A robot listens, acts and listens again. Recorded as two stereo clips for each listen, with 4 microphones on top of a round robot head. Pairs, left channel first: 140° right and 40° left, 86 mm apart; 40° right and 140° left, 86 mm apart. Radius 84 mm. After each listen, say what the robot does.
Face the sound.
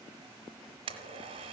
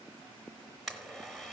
Turn 55° left.
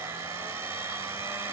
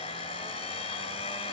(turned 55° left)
Turn 25° right.
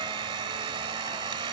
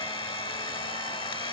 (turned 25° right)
Found it: a blender, straight ahead.